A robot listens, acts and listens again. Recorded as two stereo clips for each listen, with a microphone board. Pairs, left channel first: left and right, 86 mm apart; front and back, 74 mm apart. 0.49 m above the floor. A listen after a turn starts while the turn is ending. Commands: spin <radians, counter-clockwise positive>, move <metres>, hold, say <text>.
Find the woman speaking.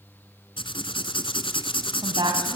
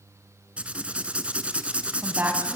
spin -2.01
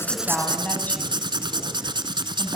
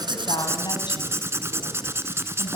spin 0.35
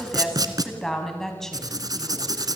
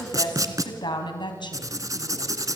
say Facing the woman speaking, over 4 m away.